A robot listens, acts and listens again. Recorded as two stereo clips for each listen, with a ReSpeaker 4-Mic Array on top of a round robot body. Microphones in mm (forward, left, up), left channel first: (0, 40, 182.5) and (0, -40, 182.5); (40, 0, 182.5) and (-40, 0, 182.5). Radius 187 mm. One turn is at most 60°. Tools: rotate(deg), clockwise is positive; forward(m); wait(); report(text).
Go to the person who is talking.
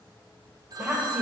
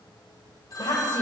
rotate(10)
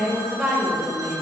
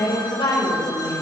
forward(1.0)
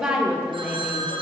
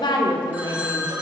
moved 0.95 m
rotate(10)
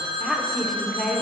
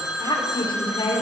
forward(1.0)
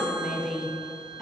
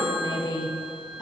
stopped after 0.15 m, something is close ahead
report("Arrived at the woman speaking, straight ahead.")